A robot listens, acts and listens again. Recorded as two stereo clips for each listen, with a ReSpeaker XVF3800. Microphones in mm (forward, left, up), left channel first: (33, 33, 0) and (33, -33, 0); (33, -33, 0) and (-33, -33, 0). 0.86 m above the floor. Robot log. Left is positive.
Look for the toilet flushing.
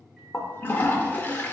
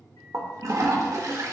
note: The toilet flushing: 150° left.
cmd yaw +150
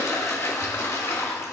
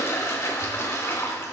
note: The toilet flushing is now 45° left.
cmd yaw +45
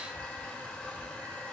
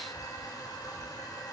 note: The toilet flushing is now 20° left.
cmd yaw +20
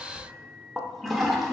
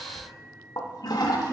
end: Found it: a toilet flushing, straight ahead, 1 to 2 m away.